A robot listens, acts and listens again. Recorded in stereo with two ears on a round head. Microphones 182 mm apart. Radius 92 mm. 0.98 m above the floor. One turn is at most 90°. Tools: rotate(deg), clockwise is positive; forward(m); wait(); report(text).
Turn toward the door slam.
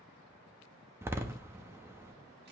rotate(30)
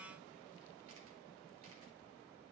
wait()
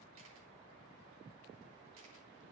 report("I heard a door slam, but can't make it out now. It was about 20° left or 140° right.")